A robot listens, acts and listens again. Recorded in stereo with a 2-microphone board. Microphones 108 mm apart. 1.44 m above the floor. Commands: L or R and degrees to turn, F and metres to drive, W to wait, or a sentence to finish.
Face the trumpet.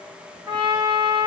R45
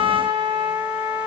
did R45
R90
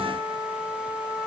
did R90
R55
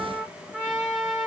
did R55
Found it: a trumpet, straight ahead.